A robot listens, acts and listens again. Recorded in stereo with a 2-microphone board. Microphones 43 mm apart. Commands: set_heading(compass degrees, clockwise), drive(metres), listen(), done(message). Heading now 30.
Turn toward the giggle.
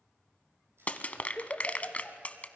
set_heading(350)
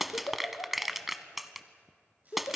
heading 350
set_heading(250)
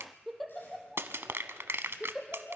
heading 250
done("Found it: a giggle, straight ahead.")